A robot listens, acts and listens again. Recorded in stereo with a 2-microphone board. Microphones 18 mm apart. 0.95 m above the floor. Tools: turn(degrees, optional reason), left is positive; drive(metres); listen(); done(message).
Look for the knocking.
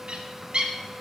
listen()
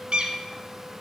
listen()
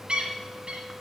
done("I can't make out knocking to turn to.")